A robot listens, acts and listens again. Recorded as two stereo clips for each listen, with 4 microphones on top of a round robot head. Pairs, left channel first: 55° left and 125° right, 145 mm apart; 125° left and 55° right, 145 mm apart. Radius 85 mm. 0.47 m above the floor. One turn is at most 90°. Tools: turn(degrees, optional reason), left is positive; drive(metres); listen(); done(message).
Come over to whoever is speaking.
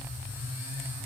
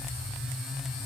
listen()
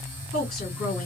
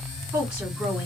turn(degrees=20, reason="The woman speaking: 20° left.")
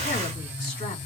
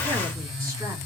listen()
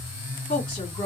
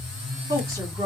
drive(metres=1.0)
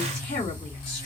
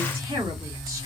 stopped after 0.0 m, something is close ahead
done("Blocked. The woman speaking is further on, straight ahead.")